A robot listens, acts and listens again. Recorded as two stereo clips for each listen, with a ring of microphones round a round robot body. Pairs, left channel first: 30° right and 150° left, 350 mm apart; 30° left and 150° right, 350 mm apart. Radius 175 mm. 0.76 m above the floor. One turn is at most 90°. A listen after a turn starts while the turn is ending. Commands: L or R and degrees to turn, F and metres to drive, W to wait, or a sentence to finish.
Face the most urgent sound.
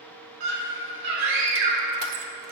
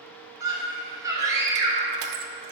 L90
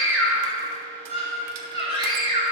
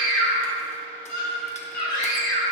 L45
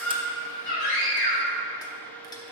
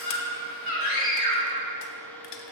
R10
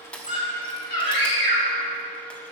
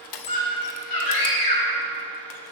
Found it: a scream, straight ahead.